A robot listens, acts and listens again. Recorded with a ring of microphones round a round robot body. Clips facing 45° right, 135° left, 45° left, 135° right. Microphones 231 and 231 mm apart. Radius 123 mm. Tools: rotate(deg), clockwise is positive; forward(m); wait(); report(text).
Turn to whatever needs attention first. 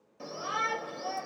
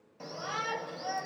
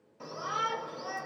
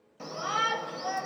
rotate(115)
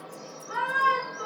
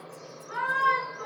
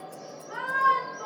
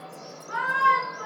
rotate(45)
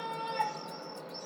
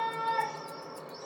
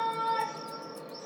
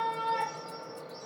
report("Facing the shout, 1 to 2 m away.")